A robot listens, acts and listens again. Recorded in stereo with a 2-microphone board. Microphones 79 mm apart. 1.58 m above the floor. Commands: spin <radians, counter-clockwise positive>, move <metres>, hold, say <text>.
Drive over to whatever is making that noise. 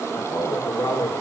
spin 1.05
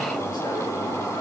hold
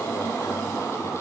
hold
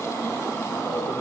say I heard a man speaking, but can't make it out now. It was about straight ahead or 60° left. I did not reach it.